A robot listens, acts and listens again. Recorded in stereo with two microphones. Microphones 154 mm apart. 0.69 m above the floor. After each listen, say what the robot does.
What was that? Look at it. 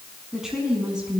Turn 30° right.
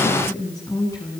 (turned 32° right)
Turn 20° left.
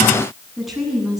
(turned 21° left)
Found it: a woman speaking, straight ahead.